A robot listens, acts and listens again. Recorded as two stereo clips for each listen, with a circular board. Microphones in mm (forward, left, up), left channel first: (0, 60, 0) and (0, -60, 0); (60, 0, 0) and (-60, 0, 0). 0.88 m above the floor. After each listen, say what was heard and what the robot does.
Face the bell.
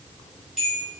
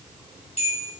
The bell: 10° right. Turn 10° right.
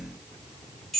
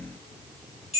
Found it: a bell, straight ahead.